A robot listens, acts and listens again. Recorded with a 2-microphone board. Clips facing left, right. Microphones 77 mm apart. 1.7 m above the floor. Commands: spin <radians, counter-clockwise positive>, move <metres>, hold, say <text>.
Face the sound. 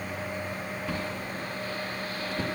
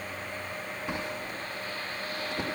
spin -0.35
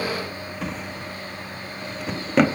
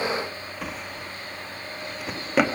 say Found it: a drawer, straight ahead.